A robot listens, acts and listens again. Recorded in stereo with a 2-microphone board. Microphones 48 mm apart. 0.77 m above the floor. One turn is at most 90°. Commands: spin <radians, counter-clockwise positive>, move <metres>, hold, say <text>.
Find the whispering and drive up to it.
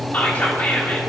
spin 0.70
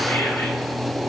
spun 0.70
hold
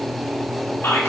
spin 1.57
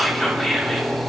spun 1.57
move 1.0
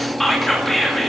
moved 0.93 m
move 1.0
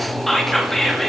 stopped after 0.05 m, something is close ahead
say Arrived at the whispering, straight ahead.